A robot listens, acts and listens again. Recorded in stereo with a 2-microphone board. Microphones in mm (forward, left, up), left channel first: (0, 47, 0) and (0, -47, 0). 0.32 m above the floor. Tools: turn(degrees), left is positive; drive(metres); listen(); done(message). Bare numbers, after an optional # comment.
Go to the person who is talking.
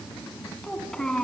turn(30)
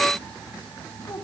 # So it is at 145° left.
turn(145)
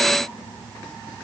listen()
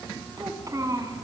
# The child speaking is now 45° right.
turn(-45)
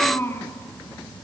# The child speaking is now 25° left.
turn(25)
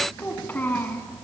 # The child speaking is now 20° left.
turn(20)
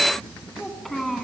drive(1.0)
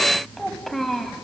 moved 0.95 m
drive(1.0)
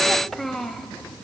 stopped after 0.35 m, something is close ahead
done("Arrived at the child speaking, straight ahead.")